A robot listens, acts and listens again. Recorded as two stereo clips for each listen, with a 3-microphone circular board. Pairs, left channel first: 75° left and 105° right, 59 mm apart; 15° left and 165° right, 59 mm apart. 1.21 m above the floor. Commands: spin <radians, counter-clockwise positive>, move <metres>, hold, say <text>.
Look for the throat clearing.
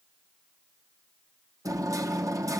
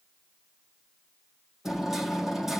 hold
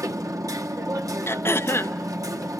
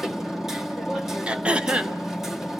spin 2.18
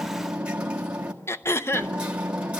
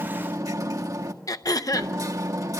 spin 0.52
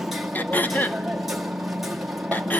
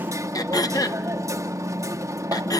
spin 0.26
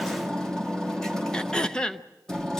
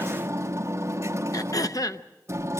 say Found it: throat clearing, straight ahead.